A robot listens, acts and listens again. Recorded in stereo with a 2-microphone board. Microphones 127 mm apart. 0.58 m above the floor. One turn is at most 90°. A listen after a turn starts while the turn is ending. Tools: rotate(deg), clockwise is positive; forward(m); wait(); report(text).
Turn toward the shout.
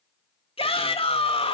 rotate(-50)
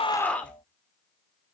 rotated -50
rotate(-10)
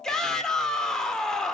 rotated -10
report("Facing the shout, 1 to 2 m away.")